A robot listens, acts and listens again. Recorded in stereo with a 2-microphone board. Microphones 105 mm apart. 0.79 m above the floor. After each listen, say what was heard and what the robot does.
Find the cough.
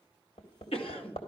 The cough: about 65° left or 115° left. Turn 65° left.
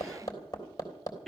Facing the cough, 2 to 4 m away.